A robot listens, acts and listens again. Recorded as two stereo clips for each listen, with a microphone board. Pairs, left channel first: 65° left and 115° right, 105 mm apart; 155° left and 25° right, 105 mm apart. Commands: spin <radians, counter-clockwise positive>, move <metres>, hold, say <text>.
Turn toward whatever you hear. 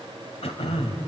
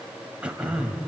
spin 0.96
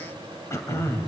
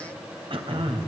say Found it: throat clearing, straight ahead, 2 to 4 m away.